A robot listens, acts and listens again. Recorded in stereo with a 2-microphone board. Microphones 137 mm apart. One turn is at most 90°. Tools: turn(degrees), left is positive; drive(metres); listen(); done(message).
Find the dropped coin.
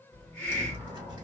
turn(degrees=-30)
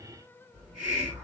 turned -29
listen()
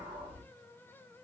done("I heard a dropped coin, but can't make it out now. It was about straight ahead or 120° right.")